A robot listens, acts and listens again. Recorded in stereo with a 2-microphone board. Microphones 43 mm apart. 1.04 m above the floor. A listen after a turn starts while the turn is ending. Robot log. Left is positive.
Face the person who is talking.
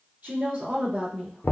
note: The woman speaking: about 40° right or 140° right.
cmd yaw -40
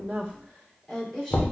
end: Found it: a woman speaking, straight ahead.